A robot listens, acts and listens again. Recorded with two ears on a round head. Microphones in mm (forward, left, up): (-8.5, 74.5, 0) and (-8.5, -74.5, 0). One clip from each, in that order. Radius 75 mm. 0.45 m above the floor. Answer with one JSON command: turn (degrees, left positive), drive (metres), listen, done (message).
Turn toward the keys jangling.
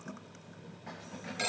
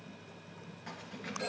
{"turn": -90}
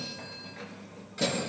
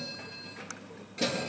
{"turn": 15}
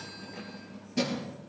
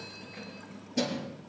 {"done": "Facing the keys jangling, over 4 m away."}